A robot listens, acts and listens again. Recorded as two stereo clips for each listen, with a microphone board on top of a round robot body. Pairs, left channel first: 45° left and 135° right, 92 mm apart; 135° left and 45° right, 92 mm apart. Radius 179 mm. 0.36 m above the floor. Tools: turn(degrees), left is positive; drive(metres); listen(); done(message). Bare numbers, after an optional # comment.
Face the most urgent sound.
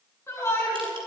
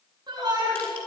# The shout: 10° right.
turn(-10)
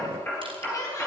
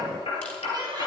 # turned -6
done("Found it: a shout, straight ahead.")